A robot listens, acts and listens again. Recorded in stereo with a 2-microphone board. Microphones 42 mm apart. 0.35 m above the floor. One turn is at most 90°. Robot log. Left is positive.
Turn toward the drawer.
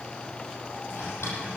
cmd yaw +90
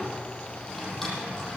end: Facing the drawer.